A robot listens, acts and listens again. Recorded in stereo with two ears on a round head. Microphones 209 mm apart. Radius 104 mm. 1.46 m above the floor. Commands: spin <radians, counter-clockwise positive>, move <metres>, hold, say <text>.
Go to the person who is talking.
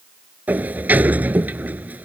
hold
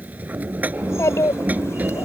spin 0.52
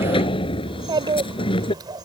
spin -0.35
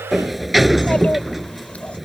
hold
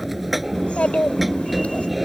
move 1.0
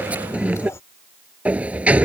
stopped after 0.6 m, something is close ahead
spin 0.26
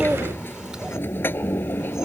hold
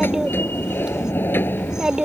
say Something is in my way. I am facing the child speaking but have not reached it.